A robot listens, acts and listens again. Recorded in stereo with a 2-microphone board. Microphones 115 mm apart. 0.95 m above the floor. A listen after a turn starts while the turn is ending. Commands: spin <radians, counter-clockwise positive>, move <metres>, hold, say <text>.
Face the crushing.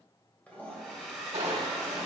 spin -1.13
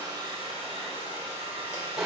say Facing the crushing.